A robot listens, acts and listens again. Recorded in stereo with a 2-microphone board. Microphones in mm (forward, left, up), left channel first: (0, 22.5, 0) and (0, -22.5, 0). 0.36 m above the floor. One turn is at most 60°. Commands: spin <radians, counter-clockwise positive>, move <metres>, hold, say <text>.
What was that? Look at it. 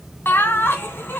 spin 0.87
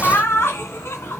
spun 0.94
spin 1.05
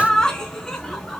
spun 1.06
spin 0.26
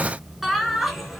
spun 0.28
say Found it: laughter, straight ahead.